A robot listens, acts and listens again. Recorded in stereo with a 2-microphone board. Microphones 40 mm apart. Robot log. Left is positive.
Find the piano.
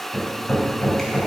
cmd idle
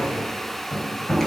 cmd idle
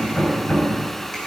end: I can't make out a piano, only hammering.